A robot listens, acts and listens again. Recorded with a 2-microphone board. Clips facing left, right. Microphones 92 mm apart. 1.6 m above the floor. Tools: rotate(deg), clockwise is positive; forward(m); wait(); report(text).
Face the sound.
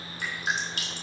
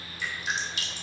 rotate(-55)
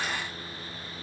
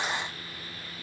wait()
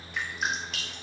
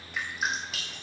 report("Found it: dripping, straight ahead.")